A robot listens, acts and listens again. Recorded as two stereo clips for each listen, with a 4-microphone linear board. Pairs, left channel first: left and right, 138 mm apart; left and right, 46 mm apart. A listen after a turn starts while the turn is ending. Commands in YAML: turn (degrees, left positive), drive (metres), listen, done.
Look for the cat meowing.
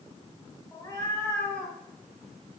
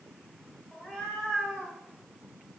turn: 30
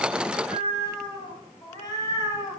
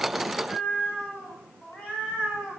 turn: 25
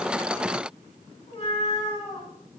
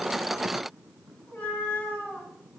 turn: 140
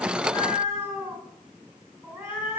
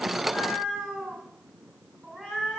turn: -15
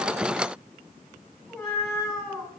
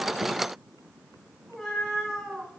done: "Facing the cat meowing."